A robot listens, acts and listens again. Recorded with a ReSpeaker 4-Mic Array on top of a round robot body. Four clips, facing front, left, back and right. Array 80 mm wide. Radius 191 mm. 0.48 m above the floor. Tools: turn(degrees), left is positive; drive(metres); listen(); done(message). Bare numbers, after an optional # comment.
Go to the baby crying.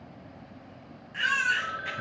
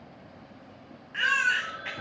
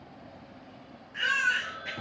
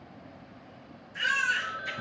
# The baby crying: 85° left.
turn(85)
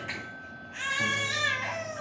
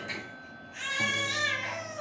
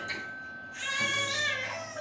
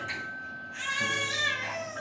drive(1.0)
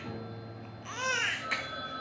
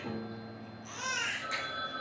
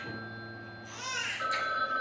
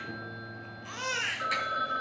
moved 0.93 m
# The baby crying is now 20° right.
turn(-20)
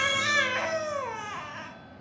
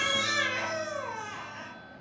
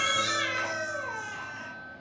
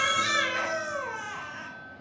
drive(1.0)
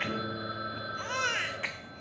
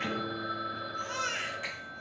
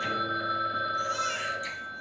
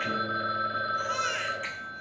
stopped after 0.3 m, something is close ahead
done("I am next to the baby crying.")